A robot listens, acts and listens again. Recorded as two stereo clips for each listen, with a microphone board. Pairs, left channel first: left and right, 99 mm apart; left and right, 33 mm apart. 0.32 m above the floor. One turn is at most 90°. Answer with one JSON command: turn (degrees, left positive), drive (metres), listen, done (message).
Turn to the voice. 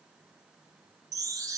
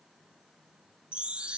{"listen": true}
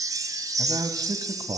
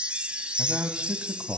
{"turn": -40}
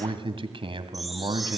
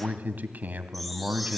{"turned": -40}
{"turn": -90}
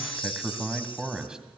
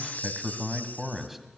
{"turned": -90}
{"turn": -10}
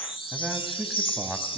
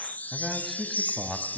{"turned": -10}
{"done": "Found it: a man speaking, straight ahead, 2 to 4 m away."}